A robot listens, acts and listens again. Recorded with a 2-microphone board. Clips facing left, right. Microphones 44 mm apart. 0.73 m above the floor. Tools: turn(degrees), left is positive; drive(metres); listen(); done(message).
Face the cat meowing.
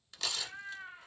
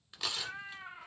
turn(degrees=-90)
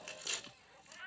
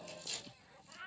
turn(degrees=10)
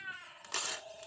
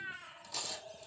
turn(degrees=10)
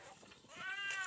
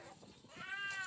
turn(degrees=15)
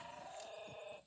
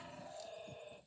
turn(degrees=20)
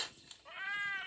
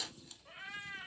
turn(degrees=20)
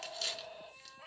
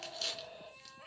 done("Found it: a cat meowing, straight ahead, 1 to 2 m away.")